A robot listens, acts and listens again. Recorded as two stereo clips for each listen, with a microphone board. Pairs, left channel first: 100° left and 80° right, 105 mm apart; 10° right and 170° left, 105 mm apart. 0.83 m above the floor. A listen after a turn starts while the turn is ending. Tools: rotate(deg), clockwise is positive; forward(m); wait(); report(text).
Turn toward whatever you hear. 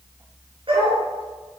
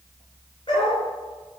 rotate(45)
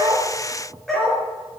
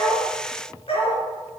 rotate(-15)
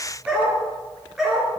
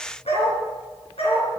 report("Found it: a dog barking, straight ahead.")